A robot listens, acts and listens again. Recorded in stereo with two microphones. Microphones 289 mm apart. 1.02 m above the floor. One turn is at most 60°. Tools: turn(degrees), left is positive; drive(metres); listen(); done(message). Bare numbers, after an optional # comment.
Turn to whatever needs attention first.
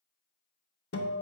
listen()
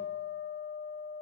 listen()
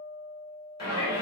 # The shout: about 65° right or 115° right.
turn(-60)
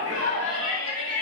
# So it is at 55° right.
turn(-55)
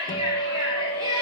# The shout is now 15° right.
turn(-15)
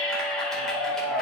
done("Facing the shout, 2 to 4 m away.")